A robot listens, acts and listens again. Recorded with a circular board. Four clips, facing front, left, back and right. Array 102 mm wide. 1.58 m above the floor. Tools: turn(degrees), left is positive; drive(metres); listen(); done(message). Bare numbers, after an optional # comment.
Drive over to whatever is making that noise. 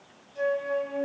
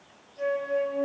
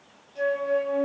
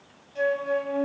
# The flute: 95° right.
turn(-95)
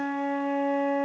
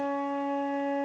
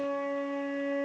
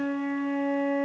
# The flute is now 10° right.
turn(-10)
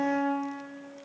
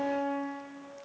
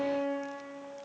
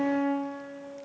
drive(1.0)
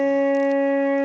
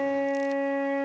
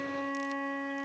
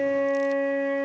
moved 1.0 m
# The flute is now 15° left.
turn(15)
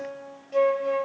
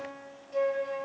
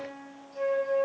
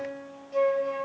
drive(1.0)
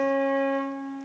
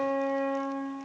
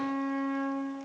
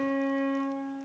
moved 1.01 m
drive(1.0)
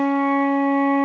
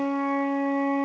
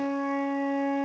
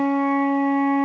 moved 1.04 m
# The flute is now 10° right.
turn(-10)
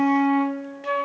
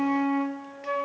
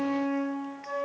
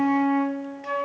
drive(1.0)
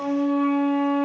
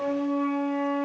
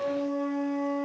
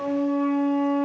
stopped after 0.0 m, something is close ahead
# The flute is now 10° left.
turn(10)
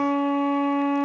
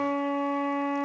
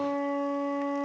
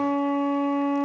done("Arrived at the flute, straight ahead.")